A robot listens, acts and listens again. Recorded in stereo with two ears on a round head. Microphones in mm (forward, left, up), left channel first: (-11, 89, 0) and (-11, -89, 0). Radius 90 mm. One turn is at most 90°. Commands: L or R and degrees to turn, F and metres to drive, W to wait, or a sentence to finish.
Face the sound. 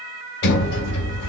L60
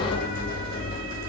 L50
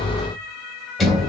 Facing the sliding door.